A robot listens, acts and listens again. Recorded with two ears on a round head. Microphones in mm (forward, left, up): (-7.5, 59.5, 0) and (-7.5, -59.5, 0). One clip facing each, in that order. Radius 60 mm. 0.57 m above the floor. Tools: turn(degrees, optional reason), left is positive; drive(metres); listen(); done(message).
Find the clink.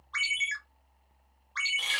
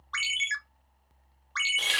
listen()
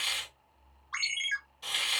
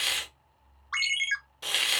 listen()
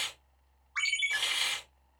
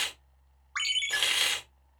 done("I can't make out a clink to turn to.")